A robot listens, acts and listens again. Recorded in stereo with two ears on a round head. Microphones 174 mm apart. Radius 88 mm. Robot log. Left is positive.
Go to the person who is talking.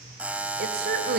note: The woman speaking: about 55° right or 125° right.
cmd yaw -55
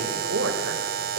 note: So it is at 75° right.
cmd yaw -75
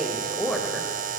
cmd fwd 1.0
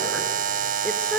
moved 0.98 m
cmd fwd 1.0
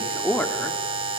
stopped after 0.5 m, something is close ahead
note: The woman speaking is now 10° left.
cmd yaw +10
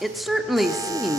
end: Arrived at the woman speaking, straight ahead.